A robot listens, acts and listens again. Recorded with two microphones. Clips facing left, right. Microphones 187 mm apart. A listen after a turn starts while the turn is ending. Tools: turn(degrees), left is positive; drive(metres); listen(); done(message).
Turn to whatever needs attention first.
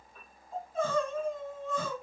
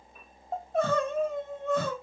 turn(degrees=-70)
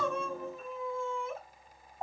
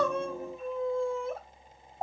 turn(degrees=-35)
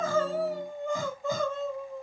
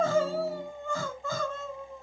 turn(degrees=15)
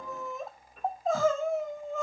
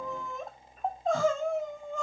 done("Found it: crying, straight ahead.")